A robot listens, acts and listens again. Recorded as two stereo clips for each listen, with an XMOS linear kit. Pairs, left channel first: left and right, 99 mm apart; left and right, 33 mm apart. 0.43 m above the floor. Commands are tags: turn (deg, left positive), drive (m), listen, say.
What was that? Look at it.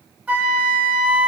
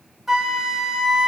<turn deg="-30"/>
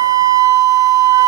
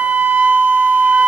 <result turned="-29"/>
<turn deg="-135"/>
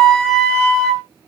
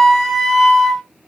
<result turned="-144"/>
<turn deg="10"/>
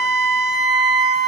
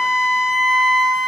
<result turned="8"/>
<say>Found it: a flute, straight ahead, under 1 m away.</say>